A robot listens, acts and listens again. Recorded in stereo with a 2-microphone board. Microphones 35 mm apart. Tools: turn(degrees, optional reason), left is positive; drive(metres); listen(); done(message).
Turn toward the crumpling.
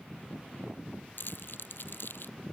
turn(degrees=70, reason="The crumpling: about 70° left or 110° left.")
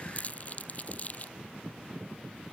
turn(degrees=40, reason="So it is at 40° left.")
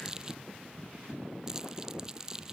turn(degrees=-20, reason="The crumpling is now 20° right.")
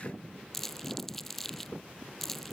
done("Found it: crumpling, straight ahead.")